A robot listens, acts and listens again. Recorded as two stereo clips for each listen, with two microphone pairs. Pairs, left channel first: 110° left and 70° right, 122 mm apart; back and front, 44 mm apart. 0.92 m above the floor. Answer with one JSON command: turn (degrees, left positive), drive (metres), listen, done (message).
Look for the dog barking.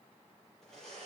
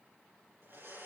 {"listen": true}
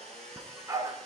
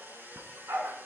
{"turn": -10}
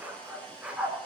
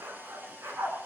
{"turn": 10}
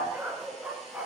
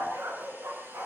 {"done": "Found it: a dog barking, straight ahead."}